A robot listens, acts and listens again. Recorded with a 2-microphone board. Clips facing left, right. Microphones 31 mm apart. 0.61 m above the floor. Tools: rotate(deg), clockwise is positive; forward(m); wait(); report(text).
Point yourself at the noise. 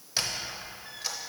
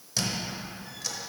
rotate(-25)
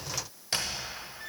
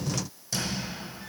rotate(-125)
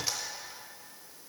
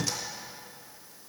rotate(-15)
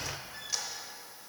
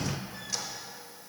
report("Facing the squeak.")